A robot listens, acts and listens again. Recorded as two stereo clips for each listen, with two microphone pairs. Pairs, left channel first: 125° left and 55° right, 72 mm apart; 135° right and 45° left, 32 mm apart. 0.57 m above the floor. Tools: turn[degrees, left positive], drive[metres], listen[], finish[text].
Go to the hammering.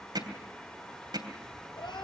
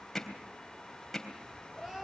Thought: The hammering: 55° right.
Action: turn[-55]
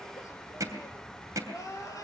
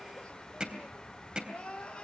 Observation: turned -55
Thought: The hammering is now 15° right.
Action: turn[-15]
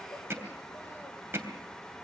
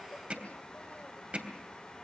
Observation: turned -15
Action: drive[1.0]
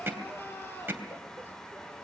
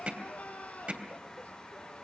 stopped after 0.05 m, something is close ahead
Action: finish[Blocked. The hammering is further on, straight ahead.]